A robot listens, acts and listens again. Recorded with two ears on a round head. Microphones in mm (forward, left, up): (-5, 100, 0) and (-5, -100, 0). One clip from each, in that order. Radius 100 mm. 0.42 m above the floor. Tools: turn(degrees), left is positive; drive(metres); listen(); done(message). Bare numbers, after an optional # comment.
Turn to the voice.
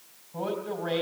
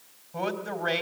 # The man speaking: about 65° right or 115° right.
turn(-65)
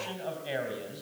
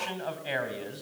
# So it is at 25° right.
turn(-25)
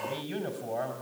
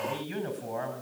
# The man speaking is now 10° left.
turn(10)
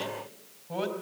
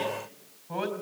done("Found it: a man speaking, straight ahead.")